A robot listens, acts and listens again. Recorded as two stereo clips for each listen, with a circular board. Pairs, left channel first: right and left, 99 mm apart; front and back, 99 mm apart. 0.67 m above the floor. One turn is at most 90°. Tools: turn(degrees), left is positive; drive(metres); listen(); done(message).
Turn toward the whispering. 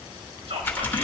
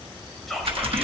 turn(degrees=90)
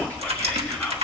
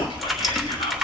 listen()
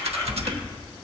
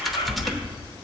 listen()
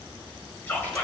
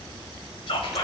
turn(degrees=-20)
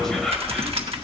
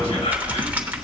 done("Found it: whispering, straight ahead, 2 to 4 m away.")